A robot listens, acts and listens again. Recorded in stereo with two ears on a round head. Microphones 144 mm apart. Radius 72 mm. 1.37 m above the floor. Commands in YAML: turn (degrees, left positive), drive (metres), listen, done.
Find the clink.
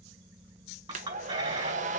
turn: -30
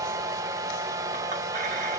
listen: true
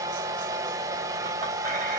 listen: true
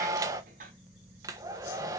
turn: -120
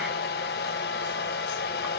listen: true
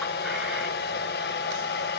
listen: true
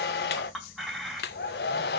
done: "Found it: a clink, straight ahead."